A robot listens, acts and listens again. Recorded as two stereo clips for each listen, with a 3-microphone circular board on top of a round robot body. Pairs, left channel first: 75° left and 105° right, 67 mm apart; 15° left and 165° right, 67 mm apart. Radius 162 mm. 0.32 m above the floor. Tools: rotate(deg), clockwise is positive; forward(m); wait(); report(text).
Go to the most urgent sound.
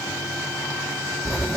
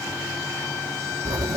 wait()
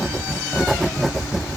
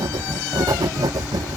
wait()
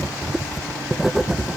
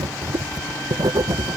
report("I can't make out anything urgent to turn to.")